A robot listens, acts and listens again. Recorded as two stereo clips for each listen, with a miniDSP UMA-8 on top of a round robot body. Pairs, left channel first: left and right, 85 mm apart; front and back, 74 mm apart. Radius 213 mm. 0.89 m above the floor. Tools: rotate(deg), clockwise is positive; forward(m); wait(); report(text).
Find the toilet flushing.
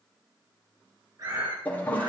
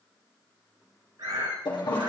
rotate(-20)
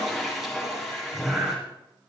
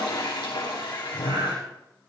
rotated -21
report("Found it: a toilet flushing, straight ahead, 2 to 4 m away.")